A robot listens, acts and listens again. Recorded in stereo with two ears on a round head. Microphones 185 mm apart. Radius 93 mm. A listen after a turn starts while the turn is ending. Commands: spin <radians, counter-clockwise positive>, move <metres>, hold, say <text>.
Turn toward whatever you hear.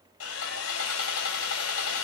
spin 1.22
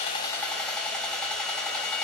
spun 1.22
say Facing the sawing.